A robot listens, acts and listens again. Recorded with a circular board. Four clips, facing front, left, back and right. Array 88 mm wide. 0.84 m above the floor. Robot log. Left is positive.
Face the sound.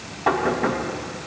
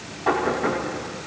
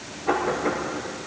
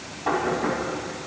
note: The knocking: 10° left.
cmd yaw +10
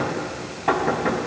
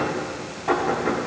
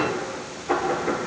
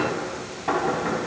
end: Facing the knocking, over 4 m away.